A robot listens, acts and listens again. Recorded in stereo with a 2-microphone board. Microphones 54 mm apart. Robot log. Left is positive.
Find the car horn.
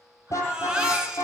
note: The car horn: about 65° left or 115° left.
cmd yaw +65
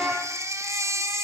end: Found it: a car horn, straight ahead, over 4 m away.